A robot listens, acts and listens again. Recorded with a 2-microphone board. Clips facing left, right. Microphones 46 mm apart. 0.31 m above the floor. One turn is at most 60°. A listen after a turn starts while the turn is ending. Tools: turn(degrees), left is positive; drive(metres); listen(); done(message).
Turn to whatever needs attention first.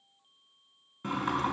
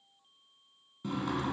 listen()
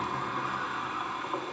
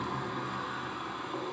listen()
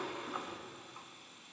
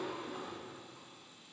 done("I can't make out anything urgent to turn to.")